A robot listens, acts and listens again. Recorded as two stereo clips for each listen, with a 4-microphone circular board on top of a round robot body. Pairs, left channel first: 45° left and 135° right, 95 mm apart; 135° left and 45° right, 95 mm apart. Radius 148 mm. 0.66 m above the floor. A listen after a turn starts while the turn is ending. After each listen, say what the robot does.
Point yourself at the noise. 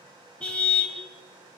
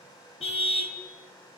Turn 125° left.
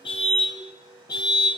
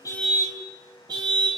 Facing the car horn, 2 to 4 m away.